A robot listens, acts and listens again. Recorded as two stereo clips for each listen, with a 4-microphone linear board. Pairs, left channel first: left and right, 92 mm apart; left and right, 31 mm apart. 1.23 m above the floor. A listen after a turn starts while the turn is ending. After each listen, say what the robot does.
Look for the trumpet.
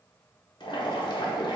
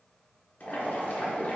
Keep listening.
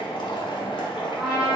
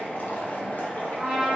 Turn 20° right.
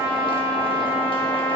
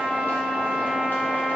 Turn 140° right.
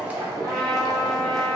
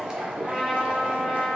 Found it: a trumpet, straight ahead, 1 to 2 m away.